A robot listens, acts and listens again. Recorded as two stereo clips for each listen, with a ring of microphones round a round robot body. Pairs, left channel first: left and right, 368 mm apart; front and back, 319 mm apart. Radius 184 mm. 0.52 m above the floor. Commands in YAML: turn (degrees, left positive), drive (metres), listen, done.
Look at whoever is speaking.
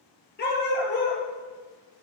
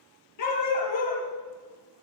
listen: true
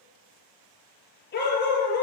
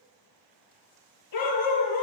listen: true
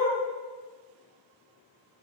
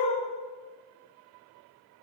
done: "I can't make out anyone speaking, only a dog barking."